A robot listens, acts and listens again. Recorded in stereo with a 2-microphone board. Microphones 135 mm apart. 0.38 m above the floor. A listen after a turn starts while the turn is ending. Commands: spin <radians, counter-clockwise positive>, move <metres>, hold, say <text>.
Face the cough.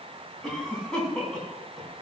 spin 0.52
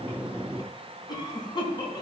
spin 2.53
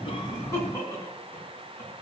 spin 0.35
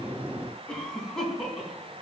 say Found it: a cough, straight ahead, over 4 m away.